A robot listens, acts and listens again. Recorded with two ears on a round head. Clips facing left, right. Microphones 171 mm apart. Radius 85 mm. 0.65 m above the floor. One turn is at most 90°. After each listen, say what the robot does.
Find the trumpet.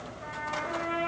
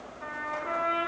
Turn 75° right.
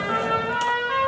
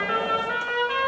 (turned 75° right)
Turn 30° right.
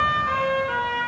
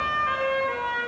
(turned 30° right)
Facing the trumpet, over 4 m away.